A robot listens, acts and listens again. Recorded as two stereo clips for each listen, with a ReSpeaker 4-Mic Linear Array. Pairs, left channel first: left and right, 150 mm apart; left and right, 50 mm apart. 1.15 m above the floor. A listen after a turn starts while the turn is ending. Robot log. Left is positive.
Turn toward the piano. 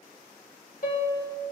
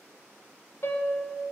note: The piano: about 65° left or 115° left.
cmd yaw +65
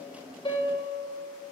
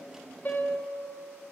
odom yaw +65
note: So it is at 35° left.
cmd yaw +35
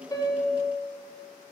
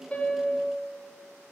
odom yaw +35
end: Facing the piano.